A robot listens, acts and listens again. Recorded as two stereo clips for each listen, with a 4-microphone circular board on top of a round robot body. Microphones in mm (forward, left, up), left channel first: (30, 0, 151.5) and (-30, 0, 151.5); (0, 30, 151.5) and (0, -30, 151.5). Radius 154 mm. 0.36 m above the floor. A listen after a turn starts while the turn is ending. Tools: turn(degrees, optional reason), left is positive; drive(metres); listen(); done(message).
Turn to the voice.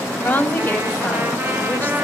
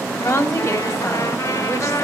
turn(degrees=60, reason="The woman speaking: 60° left.")
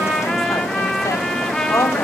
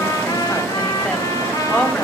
turn(degrees=20, reason="The woman speaking is now 20° left.")
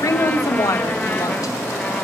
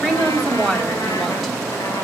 done("Found it: a woman speaking, straight ahead.")